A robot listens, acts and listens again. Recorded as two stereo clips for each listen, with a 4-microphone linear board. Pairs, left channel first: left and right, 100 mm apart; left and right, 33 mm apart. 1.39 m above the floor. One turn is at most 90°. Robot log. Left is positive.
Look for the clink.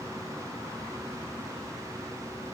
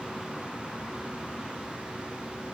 cmd idle
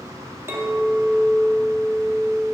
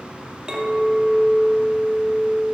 note: The clink: about 25° right or 155° right.
cmd yaw -25
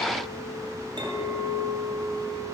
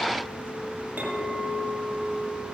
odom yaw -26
note: So it is at 130° right.
cmd yaw -90
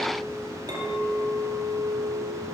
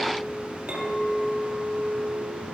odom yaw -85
note: The clink is now 45° right.
cmd yaw -45
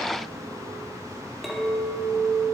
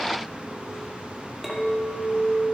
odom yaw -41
end: Found it: a clink, straight ahead.